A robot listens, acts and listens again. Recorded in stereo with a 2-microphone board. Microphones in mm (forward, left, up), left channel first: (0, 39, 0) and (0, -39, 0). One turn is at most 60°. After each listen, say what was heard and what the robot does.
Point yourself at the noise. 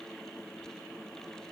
Keep listening.
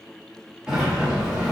Turn 30° right.
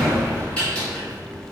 So it is at 15° left. Turn 15° left.
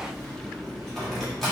Found it: a sliding door, straight ahead.